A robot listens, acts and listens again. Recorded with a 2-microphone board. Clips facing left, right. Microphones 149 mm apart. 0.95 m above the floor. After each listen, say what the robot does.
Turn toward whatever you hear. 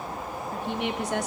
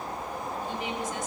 Turn 75° left.
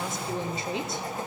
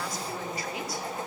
Turn 25° left.
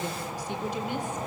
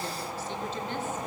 Turn 15° left.
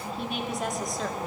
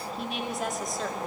Facing the woman speaking, 2 to 4 m away.